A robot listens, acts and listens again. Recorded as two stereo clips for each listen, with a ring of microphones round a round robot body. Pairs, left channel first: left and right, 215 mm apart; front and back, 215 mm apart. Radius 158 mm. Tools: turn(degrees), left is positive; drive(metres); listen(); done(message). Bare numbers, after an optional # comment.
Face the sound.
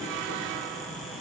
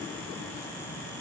listen()
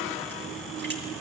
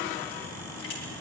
# The crushing: 55° right.
turn(-55)
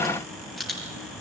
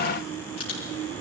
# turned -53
done("Found it: crushing, straight ahead.")